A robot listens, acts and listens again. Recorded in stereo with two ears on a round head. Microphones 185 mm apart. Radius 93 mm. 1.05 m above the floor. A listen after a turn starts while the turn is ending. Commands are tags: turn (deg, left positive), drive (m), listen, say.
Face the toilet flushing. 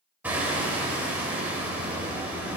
<listen/>
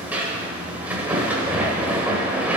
<listen/>
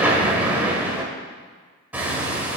<say>I can't make out a toilet flushing to turn to.</say>